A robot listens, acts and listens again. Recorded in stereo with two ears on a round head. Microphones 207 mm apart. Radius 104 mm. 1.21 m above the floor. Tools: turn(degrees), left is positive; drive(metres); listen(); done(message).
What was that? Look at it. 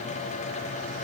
listen()
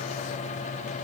listen()
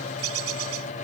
turn(degrees=-70)
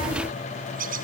turn(degrees=-40)
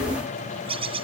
turn(degrees=-25)
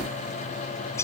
turn(degrees=10)
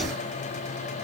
listen()
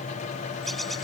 done("Found it: a bird, straight ahead.")